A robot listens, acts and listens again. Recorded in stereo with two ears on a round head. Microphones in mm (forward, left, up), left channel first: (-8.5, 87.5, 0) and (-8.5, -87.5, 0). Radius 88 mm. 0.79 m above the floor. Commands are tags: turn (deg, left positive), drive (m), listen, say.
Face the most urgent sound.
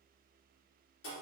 <listen/>
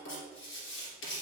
<listen/>
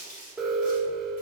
<turn deg="30"/>
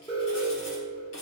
<turn deg="150"/>
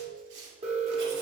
<turn deg="-30"/>
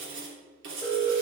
<say>Found it: an alarm, straight ahead, 1 to 2 m away.</say>